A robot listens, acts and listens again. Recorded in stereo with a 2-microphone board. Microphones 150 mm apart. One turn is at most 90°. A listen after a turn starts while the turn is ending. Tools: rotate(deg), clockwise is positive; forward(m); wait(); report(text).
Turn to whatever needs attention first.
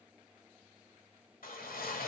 wait()
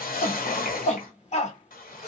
rotate(-50)
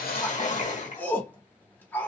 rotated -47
rotate(-15)
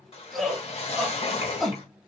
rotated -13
report("Facing the shout, 1 to 2 m away.")